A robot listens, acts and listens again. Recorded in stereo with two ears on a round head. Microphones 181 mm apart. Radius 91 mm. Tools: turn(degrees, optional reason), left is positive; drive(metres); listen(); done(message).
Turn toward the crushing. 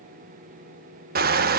turn(degrees=-50, reason="The crushing: about 50° right or 130° right.")
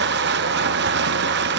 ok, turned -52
turn(degrees=-70, reason="So it is at 70° right.")
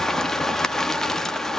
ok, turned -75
done("Facing the crushing, under 1 m away.")